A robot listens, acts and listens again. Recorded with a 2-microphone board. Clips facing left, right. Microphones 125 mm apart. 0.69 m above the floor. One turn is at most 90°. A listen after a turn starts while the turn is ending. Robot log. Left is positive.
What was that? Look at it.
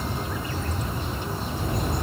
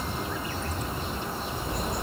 note: The bird: about 55° left or 125° left.
cmd yaw +55
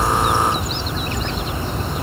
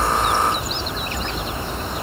note: So it is at 55° left.
cmd yaw +55
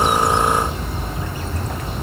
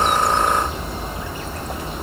note: The bird is now 15° right.
cmd yaw -15
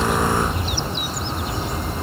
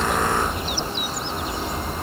end: Facing the bird, 2 to 4 m away.